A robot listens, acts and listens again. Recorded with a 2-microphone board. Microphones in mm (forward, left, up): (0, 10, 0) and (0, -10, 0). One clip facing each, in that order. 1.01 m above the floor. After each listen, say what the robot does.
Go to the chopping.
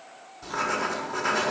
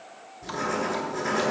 Keep listening.
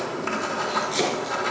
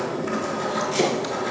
Turn 30° left.
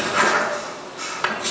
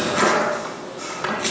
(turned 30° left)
Turn 20° right.
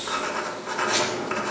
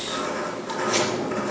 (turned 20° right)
Keep listening.
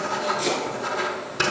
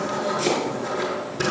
Drive 1.0 m forward.
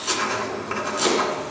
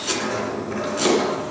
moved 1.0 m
Drive 1.0 m forward.
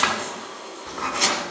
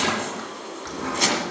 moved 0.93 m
Drive 1.0 m forward.
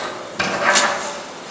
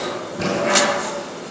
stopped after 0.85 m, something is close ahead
Keep listening.
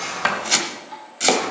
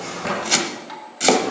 I am next to the chopping.